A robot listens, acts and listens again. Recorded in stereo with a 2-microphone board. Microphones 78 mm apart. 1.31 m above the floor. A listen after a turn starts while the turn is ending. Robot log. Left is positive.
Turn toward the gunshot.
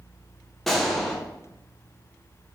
cmd yaw +30
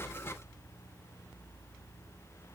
cmd idle
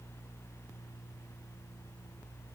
end: I heard a gunshot, but can't make it out now. It was about 25° right or 145° left.